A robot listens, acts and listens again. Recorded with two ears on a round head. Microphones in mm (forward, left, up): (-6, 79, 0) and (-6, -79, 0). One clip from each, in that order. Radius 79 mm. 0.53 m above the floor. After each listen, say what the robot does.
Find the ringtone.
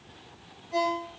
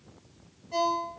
Turn 65° right.
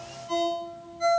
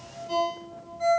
Turn 10° right.
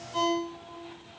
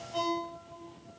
Found it: a ringtone, straight ahead.